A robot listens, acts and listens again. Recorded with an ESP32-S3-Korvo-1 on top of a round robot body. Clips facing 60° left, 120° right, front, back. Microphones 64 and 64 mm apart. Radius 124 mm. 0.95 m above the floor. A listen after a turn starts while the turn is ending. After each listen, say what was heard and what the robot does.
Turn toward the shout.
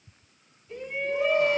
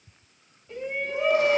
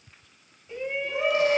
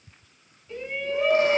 The shout: 75° right. Turn 75° right.
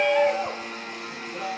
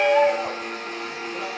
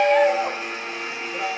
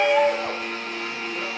The shout is now 20° right. Turn 20° right.
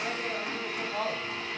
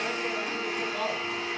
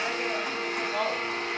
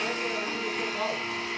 Found it: a shout, straight ahead.